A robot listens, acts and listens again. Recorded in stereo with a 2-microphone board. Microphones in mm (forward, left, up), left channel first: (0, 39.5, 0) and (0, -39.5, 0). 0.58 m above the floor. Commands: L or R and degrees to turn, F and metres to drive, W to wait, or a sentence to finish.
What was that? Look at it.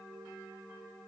W
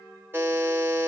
R25
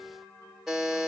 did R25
Facing the buzzer.